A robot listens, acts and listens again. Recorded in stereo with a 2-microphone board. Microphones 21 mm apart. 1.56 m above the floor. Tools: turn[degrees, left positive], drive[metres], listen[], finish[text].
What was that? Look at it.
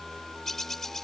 Thought: The bird: about 15° left or 165° left.
Action: turn[15]
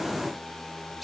Action: listen[]
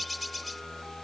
Action: finish[Facing the bird.]